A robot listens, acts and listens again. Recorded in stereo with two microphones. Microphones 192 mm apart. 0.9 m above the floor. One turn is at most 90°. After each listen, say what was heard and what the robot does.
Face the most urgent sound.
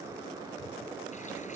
Keep listening.
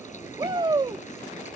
The shout: about 25° right or 155° right. Turn 25° right.
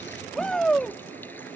Facing the shout.